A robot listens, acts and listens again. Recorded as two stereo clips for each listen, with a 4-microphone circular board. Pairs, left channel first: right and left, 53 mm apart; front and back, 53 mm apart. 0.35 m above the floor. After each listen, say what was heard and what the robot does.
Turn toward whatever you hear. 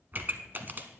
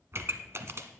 The pop: 140° left. Turn 140° left.
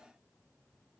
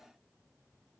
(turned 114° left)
Nothing new. It was at 25° left. Turn 25° left.
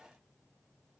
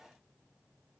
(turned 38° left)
Nothing new. It was at 10° right. Turn 10° right.
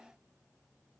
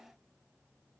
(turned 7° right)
I heard a pop from this way, but can't make it out now.